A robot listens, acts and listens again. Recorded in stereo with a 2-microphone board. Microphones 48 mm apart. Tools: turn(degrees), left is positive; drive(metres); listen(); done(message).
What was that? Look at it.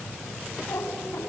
turn(degrees=90)
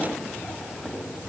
turn(degrees=15)
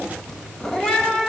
turn(degrees=15)
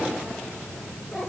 turn(degrees=15)
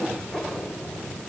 turn(degrees=10)
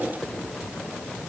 listen()
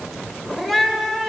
done("Facing the cat meowing, 1 to 2 m away.")